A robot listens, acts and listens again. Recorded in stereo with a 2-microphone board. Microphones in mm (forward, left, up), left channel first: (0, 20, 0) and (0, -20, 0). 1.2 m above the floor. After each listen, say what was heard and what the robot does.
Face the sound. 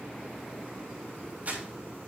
The crumpling: about 45° right or 135° right. Turn 45° right.
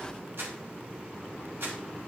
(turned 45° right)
So it is at 85° right. Turn 85° right.
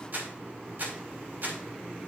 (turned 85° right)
The crumpling is now 55° right. Turn 55° right.
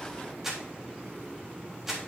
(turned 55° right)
The crumpling is now 10° right. Turn 10° right.
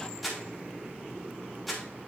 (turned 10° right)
Found it: crumpling, straight ahead.